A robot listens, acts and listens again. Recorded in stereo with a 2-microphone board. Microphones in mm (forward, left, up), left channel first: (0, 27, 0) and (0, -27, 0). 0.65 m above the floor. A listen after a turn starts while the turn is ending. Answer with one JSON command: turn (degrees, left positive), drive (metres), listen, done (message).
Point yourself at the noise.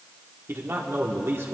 {"turn": -50}
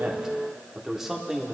{"done": "Found it: a man speaking, straight ahead, 1 to 2 m away."}